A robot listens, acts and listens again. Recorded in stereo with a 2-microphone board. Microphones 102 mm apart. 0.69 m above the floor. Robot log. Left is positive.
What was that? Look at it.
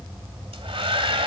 note: The hair dryer: about 70° right or 110° right.
cmd yaw -70
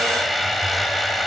end: Facing the hair dryer, 1 to 2 m away.